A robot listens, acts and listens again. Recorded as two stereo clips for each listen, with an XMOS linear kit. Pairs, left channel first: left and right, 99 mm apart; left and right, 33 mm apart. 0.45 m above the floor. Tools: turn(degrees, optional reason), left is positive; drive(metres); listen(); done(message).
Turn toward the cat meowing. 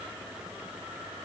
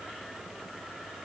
listen()
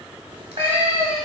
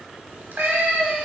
turn(degrees=-90)
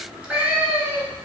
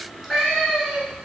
turn(degrees=-20, reason="So it is at 20° right.")
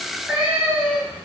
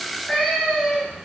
turn(degrees=-20, reason="The cat meowing is now 20° right.")
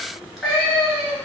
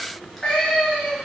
turn(degrees=-10, reason="The cat meowing is now 10° right.")
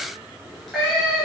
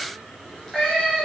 done("Found it: a cat meowing, straight ahead, 1 to 2 m away.")